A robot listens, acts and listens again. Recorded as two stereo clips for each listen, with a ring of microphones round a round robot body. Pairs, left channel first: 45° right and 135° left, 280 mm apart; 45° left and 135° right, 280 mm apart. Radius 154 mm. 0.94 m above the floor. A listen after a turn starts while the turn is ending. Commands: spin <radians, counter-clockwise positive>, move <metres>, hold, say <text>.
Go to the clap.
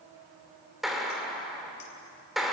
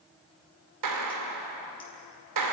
spin -2.36
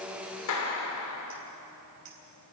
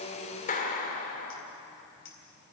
spin -0.26
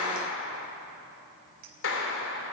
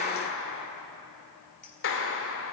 move 1.0
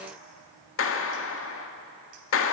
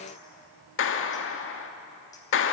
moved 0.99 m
move 1.0
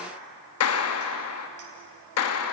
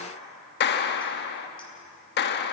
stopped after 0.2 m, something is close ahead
spin -0.17
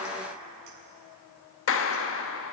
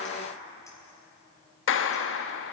say I am next to the clap.